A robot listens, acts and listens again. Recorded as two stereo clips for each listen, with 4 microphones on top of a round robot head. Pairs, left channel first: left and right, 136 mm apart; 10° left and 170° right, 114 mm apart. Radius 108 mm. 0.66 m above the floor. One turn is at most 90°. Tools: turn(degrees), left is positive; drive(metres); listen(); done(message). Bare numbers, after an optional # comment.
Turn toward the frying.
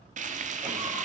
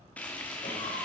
# The frying: 70° right.
turn(-70)
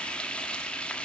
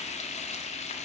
# The frying is now 10° left.
turn(10)
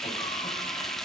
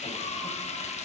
done("Facing the frying, 1 to 2 m away.")